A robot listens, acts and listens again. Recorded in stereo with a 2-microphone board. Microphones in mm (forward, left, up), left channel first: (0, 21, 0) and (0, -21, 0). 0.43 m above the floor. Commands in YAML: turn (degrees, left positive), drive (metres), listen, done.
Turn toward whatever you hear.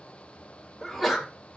turn: 30
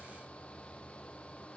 listen: true
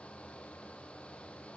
done: "I heard a sneeze, but can't make it out now. It was about 30° right or 150° left."